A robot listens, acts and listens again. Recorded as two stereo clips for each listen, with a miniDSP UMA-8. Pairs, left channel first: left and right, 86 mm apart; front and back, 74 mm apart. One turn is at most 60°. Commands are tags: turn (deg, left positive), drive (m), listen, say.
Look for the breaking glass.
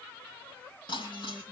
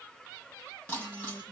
<turn deg="55"/>
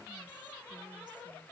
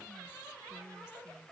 <say>Facing where the breaking glass came from. I can't hear it now.</say>